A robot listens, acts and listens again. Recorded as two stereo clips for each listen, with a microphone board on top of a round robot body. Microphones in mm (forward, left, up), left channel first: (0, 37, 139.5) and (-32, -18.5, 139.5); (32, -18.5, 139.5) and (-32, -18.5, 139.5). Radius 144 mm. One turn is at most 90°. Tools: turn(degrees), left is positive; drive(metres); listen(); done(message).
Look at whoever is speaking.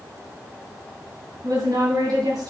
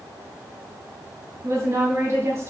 turn(degrees=-90)
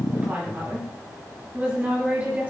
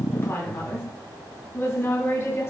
turn(degrees=-50)
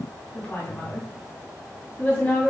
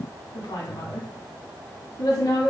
done("Facing the woman speaking, 2 to 4 m away.")